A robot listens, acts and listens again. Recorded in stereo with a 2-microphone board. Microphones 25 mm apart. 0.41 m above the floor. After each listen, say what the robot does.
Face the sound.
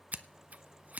Turn 90° right.
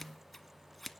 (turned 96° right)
Found it: scissors, straight ahead.